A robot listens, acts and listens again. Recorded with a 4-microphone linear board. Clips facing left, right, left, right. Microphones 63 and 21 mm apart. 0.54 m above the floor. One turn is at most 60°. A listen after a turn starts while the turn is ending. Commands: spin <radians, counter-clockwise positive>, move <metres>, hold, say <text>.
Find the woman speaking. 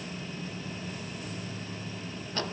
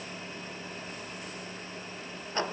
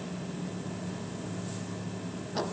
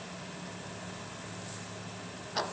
hold
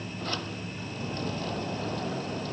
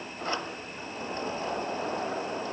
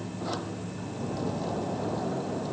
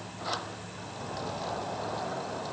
hold
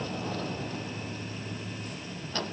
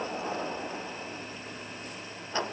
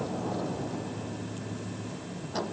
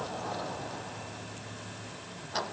say I can't make out a woman speaking, only a sliding door.